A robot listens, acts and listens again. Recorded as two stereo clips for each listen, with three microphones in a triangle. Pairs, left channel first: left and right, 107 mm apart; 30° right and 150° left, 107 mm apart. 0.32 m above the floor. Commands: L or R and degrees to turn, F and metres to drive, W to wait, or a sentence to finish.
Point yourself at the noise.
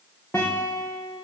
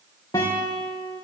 L25
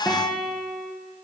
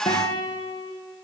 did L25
Found it: a guitar, straight ahead.